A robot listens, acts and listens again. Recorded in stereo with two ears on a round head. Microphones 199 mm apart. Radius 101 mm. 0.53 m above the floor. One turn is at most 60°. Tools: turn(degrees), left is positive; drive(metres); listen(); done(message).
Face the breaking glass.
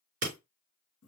turn(degrees=-40)
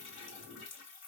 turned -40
listen()
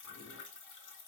done("I heard breaking glass, but can't make it out now. It was about straight ahead or 100° right.")